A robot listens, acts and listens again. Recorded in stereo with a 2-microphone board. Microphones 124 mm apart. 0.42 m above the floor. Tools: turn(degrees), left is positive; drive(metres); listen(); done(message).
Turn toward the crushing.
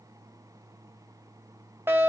listen()
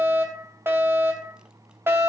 listen()
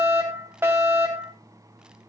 done("I can't make out crushing to turn to.")